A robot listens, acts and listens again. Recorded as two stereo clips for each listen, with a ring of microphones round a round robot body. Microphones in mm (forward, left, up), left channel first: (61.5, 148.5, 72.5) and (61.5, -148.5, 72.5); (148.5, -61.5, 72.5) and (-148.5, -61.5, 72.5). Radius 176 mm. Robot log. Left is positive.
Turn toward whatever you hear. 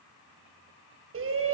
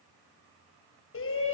note: The shout: 45° right.
cmd yaw -45
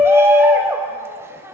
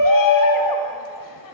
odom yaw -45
note: The shout is now 10° right.
cmd yaw -10
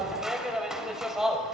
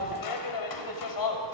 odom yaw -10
end: Found it: a shout, straight ahead.